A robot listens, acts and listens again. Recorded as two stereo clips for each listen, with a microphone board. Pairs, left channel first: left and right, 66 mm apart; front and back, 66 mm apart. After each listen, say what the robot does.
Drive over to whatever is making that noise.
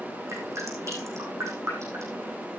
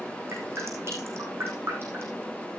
Turn 130° right.
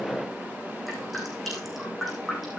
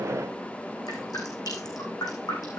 Drive 1.0 m forward.
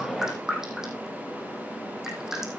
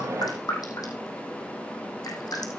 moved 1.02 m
Turn 10° right.
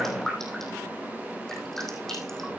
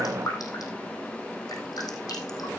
Drive 1.0 m forward.
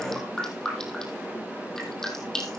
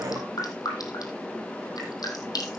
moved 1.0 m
Drive 1.0 m forward.
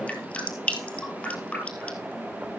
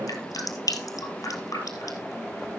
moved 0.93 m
Turn 20° left.
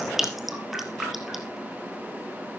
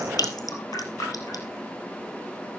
Drive 1.0 m forward.
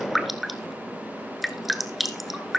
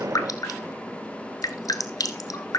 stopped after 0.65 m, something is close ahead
I am next to the dripping.